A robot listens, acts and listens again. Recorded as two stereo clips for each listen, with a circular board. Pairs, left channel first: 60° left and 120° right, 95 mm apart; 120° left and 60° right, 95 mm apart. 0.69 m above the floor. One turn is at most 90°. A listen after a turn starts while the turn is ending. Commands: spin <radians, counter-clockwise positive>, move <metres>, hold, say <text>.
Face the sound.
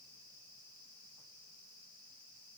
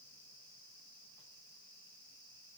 hold
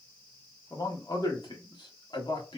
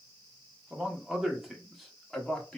spin 0.70
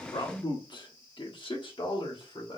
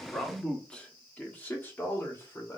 spin 1.13
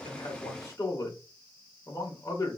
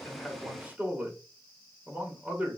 spin 0.17
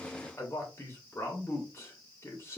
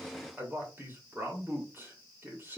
say Facing the man speaking.